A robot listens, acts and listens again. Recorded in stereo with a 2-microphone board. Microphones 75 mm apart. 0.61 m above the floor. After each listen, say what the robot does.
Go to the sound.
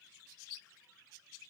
Keep listening.
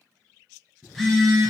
Turn 30° left.
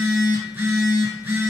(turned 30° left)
Turn 25° right.
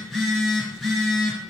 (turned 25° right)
Drive 1.0 m forward.
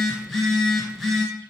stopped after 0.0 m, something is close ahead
Something is in my way. I am facing the phone buzzing but have not reached it.